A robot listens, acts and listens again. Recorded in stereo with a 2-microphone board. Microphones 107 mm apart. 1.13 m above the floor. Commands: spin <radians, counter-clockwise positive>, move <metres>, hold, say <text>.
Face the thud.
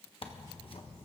hold
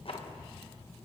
hold
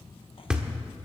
spin -0.52
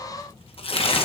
hold
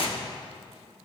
say I heard a thud, but can't make it out now. It was about 20° left or 140° right.